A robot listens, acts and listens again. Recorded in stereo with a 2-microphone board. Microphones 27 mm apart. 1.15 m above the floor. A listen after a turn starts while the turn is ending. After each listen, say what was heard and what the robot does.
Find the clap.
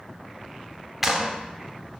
Turn 30° right.
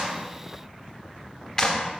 So it is at 20° left. Turn 20° left.
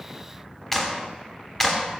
The clap is now 10° left. Turn 10° left.
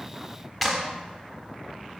Facing the clap, 2 to 4 m away.